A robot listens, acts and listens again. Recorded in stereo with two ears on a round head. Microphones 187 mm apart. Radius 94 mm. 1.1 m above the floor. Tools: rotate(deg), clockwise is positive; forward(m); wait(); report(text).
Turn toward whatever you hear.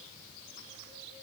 wait()
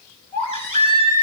rotate(-30)
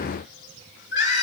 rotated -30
rotate(-120)
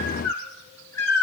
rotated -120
rotate(-10)
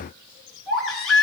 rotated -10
report("Facing the baby crying.")